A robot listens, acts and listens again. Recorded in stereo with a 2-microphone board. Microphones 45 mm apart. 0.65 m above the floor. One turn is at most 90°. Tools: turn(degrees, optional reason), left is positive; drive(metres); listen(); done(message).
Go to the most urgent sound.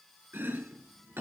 listen()
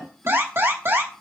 turn(degrees=-70, reason="The alarm: about 70° right or 110° right.")
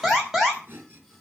drive(metres=1.0)
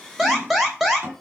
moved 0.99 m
drive(metres=1.0)
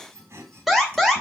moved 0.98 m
drive(metres=1.0)
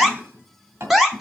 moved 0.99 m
drive(metres=1.0)
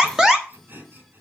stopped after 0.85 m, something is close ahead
turn(degrees=-15, reason="The alarm is now 15° right.")
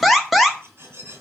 done("Arrived at the alarm, straight ahead.")